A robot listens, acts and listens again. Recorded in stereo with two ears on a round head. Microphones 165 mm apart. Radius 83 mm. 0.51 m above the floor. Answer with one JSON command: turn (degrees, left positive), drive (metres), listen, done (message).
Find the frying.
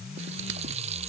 {"turn": -35}
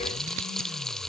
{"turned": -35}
{"done": "Facing the frying."}